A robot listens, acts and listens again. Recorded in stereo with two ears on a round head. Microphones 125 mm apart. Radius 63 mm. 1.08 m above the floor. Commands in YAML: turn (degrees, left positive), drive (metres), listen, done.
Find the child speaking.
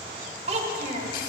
turn: -60
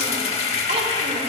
listen: true
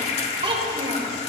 turn: -35
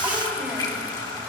listen: true
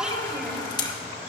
done: "Facing the child speaking."